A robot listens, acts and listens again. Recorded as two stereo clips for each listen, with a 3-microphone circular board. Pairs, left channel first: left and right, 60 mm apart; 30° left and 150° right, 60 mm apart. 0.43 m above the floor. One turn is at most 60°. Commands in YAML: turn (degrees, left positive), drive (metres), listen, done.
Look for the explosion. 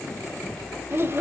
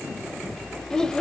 listen: true
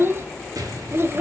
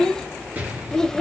turn: -60
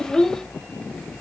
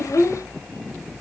turn: -25
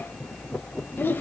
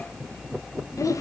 done: "I heard an explosion from this way, but can't make it out now."